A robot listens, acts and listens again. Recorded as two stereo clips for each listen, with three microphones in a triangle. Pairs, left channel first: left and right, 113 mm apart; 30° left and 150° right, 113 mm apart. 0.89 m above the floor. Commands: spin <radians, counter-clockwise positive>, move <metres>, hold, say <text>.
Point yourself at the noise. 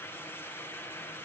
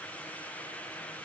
hold
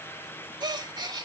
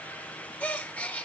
spin -0.79
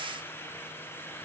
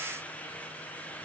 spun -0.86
say Facing where the gasp came from. I can't hear it now.